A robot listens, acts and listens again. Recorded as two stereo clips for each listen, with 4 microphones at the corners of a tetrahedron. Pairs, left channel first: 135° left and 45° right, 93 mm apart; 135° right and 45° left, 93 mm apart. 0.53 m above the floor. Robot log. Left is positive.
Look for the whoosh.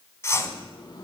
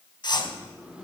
note: The whoosh: 165° right.
cmd yaw -165
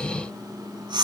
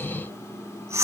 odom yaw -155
note: The whoosh is now 10° right.
cmd yaw -10
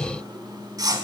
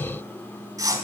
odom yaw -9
end: Found it: a whoosh, straight ahead.